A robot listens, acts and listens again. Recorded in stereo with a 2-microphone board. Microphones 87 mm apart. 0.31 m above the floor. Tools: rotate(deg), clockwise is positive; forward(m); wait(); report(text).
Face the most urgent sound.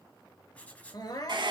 rotate(-50)
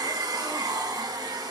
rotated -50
wait()
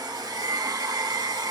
wait()
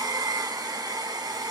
report("I heard crying, but can't make it out now. It was about straight ahead or 80° left.")